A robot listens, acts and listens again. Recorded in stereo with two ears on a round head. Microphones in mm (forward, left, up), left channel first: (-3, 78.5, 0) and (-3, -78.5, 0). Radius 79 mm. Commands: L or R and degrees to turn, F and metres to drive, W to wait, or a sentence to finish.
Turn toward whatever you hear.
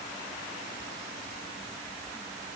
W
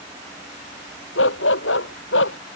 L90
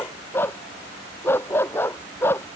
L15
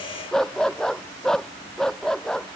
Found it: a dog barking, straight ahead.